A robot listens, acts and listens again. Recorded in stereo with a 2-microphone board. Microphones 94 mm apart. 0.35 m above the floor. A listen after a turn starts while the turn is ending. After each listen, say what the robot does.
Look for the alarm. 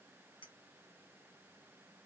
Keep listening.
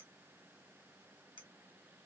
Keep listening.
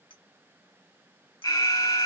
Turn 40° left.
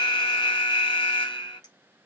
Turn 90° left.
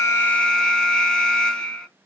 Facing the alarm, 1 to 2 m away.